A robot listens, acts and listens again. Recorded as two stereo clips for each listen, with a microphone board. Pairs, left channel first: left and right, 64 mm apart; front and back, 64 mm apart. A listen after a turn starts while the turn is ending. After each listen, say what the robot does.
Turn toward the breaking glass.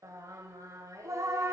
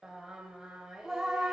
Keep listening.
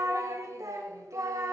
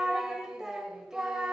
Keep listening.
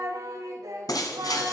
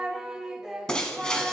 Turn 80° left.
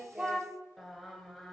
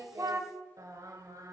Facing where the breaking glass came from. I can't hear it now.